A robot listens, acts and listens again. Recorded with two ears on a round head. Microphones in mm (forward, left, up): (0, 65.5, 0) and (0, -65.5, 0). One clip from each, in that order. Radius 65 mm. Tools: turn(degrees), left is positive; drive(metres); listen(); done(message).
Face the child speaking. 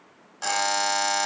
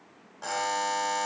listen()
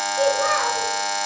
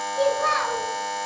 turn(degrees=-30)
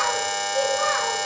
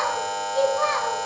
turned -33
turn(degrees=-110)
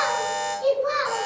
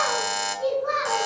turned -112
turn(degrees=10)
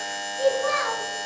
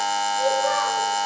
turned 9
done("Facing the child speaking.")